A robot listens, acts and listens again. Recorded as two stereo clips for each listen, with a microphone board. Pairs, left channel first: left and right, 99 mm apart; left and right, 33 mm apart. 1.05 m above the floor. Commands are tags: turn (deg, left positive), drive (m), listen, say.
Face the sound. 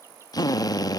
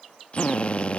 <turn deg="40"/>
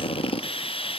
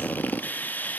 <turn deg="95"/>
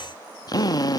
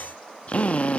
<turn deg="45"/>
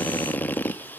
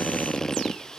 <turn deg="20"/>
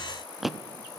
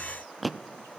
<say>Facing the drill, under 1 m away.</say>